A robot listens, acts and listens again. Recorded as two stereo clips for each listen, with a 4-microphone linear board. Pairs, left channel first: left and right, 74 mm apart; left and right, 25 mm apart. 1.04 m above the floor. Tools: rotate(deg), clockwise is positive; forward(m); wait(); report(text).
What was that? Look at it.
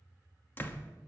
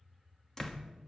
rotate(-30)
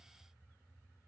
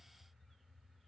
wait()
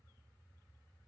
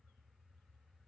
report("I heard a door slam, but can't make it out now. It was about straight ahead or 120° left.")